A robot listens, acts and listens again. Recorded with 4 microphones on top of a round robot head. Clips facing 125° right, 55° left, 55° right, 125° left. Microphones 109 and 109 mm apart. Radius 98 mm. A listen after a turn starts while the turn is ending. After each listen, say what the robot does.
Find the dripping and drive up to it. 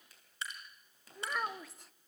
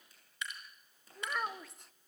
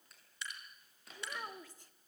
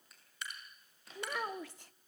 Turn 175° left.
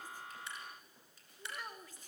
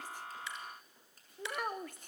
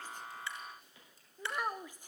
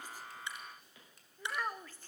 Keep listening.
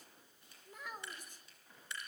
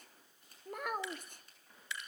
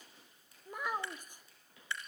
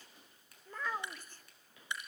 Turn 55° left.
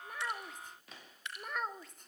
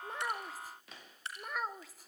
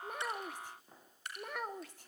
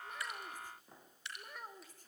Drive 1.0 m forward.
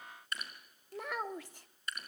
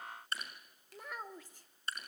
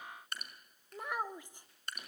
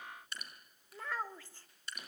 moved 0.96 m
Turn 10° right.
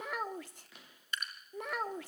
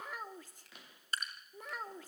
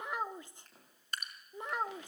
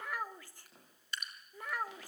Drive 1.0 m forward.
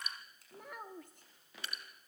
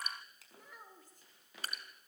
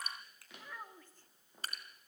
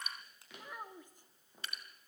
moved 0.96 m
Drive 1.0 m forward.
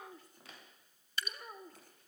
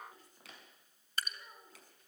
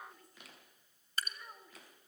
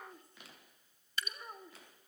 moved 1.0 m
Drive 1.0 m forward.
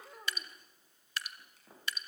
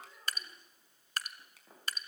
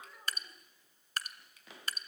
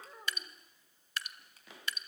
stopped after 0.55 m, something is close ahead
I am next to the dripping.